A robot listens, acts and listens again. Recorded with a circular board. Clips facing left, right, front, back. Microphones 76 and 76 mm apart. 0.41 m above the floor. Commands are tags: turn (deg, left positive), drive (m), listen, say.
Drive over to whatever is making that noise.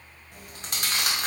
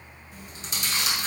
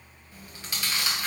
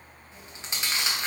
<turn deg="115"/>
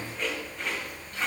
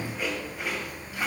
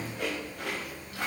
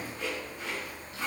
<turn deg="-10"/>
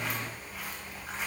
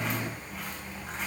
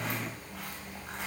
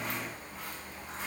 <drive m="1.0"/>
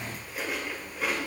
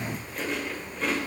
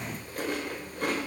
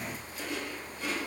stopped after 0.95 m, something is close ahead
<say>Arrived at the chewing, straight ahead.</say>